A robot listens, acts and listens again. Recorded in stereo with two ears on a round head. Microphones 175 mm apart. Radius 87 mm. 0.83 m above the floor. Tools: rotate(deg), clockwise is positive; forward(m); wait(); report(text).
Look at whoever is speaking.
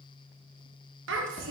rotate(65)
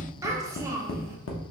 rotate(20)
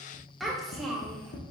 report("Facing the child speaking.")